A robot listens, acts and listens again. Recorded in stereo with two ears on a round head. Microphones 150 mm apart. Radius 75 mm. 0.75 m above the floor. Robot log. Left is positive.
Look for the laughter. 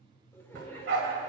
note: The laughter: about 15° left or 165° left.
cmd yaw +15
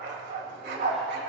cmd idle
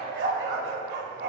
cmd idle
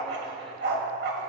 end: I heard laughter, but can't make it out now. It was about straight ahead or 150° left.